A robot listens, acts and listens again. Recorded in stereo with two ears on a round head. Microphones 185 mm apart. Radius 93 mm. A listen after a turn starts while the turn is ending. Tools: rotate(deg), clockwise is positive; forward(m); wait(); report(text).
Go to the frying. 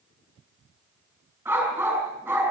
wait()
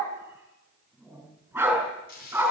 rotate(-50)
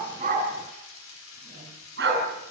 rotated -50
rotate(-80)
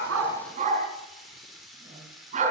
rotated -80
forward(1.0)
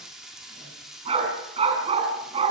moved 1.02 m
forward(1.0)
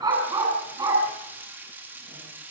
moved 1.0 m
rotate(10)
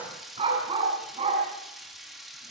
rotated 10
forward(1.0)
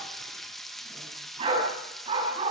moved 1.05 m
forward(1.0)
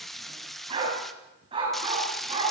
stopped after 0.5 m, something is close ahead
report("I am next to the frying.")